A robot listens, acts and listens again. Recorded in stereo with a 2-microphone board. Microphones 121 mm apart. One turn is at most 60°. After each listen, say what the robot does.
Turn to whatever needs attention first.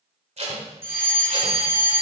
Turn 20° right.
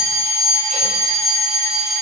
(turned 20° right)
Found it: a fire alarm, straight ahead.